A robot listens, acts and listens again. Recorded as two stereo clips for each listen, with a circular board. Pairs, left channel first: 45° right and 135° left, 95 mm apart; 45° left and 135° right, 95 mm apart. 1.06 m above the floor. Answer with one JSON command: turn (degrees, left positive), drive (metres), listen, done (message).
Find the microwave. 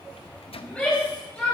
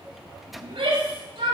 {"turn": -45}
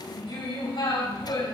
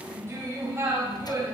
{"listen": true}
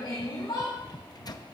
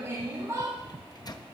{"done": "Found it: a microwave, straight ahead, under 1 m away."}